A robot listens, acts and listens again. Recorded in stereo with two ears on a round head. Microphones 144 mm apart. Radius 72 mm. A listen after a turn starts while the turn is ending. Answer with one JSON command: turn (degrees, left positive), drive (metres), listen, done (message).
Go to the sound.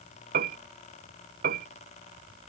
{"turn": -60}
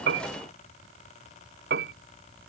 {"turn": -65}
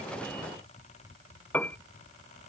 {"turn": 10}
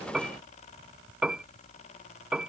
{"drive": 1.0}
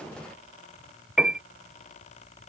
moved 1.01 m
{"drive": 1.0}
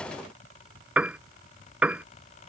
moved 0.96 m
{"drive": 1.0}
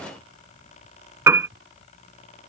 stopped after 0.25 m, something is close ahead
{"turn": -15}
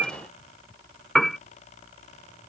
{"done": "I am next to the piano."}